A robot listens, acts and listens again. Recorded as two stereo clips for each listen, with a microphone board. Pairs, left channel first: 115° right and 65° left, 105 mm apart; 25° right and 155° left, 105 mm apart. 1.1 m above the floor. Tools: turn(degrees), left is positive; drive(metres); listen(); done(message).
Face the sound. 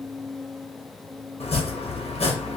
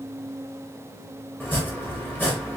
turn(degrees=-95)
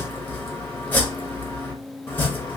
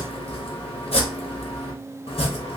turn(degrees=-40)
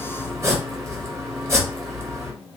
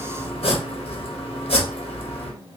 done("Facing the chopping, under 1 m away.")